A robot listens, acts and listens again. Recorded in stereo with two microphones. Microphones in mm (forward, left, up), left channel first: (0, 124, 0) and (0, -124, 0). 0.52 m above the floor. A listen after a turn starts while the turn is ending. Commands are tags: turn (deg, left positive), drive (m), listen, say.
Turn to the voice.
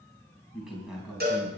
<turn deg="30"/>
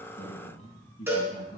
<turn deg="150"/>
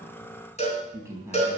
<turn deg="-10"/>
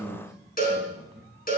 <say>Facing the man speaking, over 4 m away.</say>